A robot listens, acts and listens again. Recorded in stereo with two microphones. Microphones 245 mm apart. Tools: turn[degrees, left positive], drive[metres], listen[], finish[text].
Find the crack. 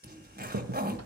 Action: turn[-90]
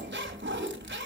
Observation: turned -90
Action: finish[Facing where the crack came from. I can't hear it now.]